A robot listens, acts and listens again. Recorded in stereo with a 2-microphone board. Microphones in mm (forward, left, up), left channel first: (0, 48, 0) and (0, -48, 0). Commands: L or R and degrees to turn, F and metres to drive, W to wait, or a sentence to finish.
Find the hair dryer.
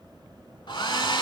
L50
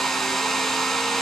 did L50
Found it: a hair dryer, straight ahead.